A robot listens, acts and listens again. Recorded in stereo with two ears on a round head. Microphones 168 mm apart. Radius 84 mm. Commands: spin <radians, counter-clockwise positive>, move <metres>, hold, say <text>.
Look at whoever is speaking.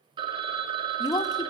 spin 0.35
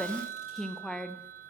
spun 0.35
say Facing the woman speaking.